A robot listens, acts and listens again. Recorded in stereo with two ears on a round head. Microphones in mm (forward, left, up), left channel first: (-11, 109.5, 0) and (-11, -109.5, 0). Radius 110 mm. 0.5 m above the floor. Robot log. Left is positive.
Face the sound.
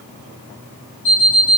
cmd yaw +90
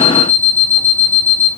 note: So it is at 15° right.
cmd yaw -15
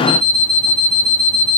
end: Found it: an alarm clock, straight ahead, 1 to 2 m away.